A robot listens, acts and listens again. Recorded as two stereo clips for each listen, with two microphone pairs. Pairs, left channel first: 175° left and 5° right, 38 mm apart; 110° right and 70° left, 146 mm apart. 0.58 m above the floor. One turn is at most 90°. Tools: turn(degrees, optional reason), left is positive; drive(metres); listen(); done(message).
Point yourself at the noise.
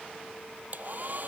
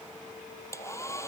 turn(degrees=-40, reason="The hair dryer: 40° right.")
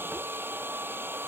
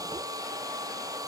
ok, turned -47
done("Facing the hair dryer.")